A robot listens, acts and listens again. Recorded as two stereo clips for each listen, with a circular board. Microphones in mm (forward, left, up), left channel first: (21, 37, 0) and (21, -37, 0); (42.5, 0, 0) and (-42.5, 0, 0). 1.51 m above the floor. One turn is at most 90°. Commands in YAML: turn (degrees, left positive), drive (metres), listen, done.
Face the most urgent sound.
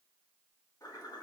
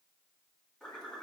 listen: true
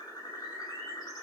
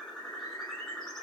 listen: true
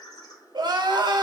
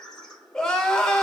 turn: -80
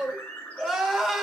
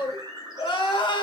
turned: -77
done: "Facing the crying."